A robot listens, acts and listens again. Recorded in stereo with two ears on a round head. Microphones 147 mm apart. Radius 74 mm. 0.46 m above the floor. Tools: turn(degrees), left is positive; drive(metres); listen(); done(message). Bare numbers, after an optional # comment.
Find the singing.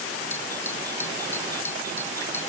listen()
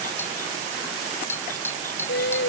# The singing: about 70° left or 110° left.
turn(70)
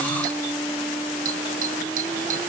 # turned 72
done("Facing the singing.")